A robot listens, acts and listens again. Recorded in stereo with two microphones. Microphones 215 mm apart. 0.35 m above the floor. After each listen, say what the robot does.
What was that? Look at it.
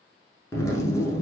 Turn 30° left.
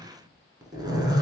Turn 20° right.
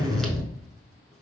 Facing the zipper.